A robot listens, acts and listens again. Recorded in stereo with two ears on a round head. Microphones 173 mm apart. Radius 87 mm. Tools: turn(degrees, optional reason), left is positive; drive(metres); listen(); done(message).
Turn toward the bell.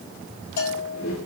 turn(degrees=55, reason="The bell: about 55° left or 125° left.")
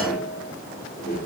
listen()
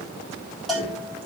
done("Facing the bell, over 4 m away.")